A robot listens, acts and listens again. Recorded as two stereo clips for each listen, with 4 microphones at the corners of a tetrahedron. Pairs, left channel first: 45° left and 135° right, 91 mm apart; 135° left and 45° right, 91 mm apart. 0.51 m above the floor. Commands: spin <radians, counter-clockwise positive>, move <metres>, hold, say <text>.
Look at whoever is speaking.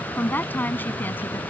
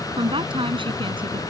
spin -0.44
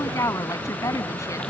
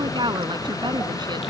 spin -0.17
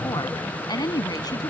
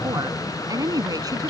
say Facing the woman speaking.